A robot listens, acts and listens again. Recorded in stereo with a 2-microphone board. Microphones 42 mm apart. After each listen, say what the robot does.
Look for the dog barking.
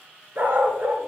Turn 35° right.
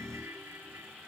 Keep listening.
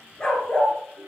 Turn 25° left.
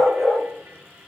Turn 10° left.
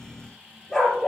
Turn 15° left.
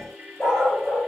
Facing the dog barking.